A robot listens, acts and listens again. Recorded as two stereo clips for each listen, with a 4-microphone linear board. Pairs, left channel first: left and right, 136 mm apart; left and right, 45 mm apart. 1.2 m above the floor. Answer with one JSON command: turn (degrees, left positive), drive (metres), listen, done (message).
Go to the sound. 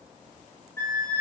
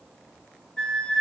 {"turn": 20}
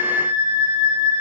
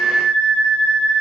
{"turn": 145}
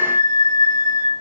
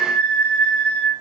{"turn": 25}
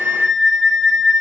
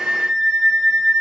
{"drive": 1.0}
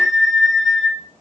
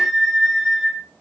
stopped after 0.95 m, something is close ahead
{"done": "Arrived at the flute, straight ahead."}